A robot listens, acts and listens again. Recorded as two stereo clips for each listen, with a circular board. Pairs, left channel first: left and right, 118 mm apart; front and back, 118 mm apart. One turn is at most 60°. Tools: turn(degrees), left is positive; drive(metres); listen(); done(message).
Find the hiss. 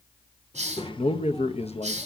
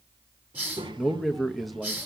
turn(degrees=-60)
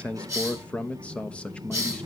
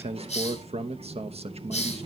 turn(degrees=-25)
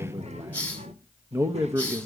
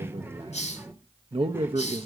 turn(degrees=10)
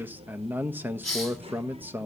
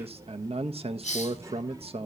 done("Facing the hiss, 1 to 2 m away.")